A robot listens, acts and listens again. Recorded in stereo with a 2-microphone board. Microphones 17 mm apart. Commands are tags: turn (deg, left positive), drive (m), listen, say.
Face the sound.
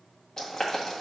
<turn deg="40"/>
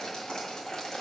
<turn deg="90"/>
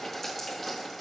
<turn deg="10"/>
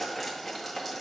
<say>Facing the boiling.</say>